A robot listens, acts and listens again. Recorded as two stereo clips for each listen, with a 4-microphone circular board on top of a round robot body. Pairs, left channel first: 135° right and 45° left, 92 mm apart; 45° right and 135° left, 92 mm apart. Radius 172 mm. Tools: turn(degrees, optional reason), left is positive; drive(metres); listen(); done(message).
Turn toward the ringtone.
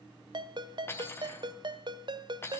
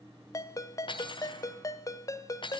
turn(degrees=10, reason="The ringtone: 10° left.")
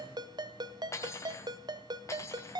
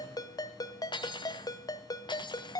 done("Found it: a ringtone, straight ahead, 1 to 2 m away.")